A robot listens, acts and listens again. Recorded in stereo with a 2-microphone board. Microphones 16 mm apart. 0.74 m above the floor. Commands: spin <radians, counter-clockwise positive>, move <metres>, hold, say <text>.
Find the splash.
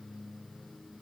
hold
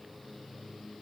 hold
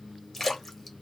spin 0.52
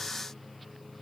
hold
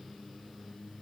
say I heard a splash, but can't make it out now. It was about 20° right or 140° left.